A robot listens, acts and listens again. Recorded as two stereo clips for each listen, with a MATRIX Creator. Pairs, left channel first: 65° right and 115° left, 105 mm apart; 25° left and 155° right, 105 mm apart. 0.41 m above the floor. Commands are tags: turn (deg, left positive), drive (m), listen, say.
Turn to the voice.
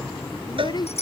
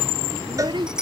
<turn deg="-115"/>
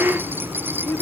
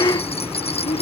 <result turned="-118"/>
<say>Facing the child speaking.</say>